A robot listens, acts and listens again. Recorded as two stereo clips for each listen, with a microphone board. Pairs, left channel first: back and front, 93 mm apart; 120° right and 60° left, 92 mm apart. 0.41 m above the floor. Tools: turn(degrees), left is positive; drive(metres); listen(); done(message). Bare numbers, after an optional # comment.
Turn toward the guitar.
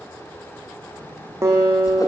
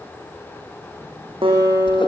# The guitar: 60° left.
turn(60)
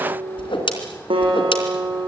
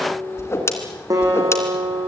# The guitar is now 15° left.
turn(15)
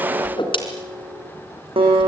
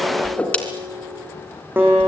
done("Found it: a guitar, straight ahead, over 4 m away.")